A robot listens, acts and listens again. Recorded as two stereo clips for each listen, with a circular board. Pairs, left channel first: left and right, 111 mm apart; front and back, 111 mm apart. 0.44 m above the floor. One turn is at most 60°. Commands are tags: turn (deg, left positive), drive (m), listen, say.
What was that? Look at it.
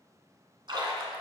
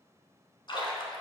<turn deg="-45"/>
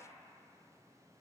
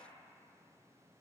<say>I heard a splash from this way, but can't make it out now.</say>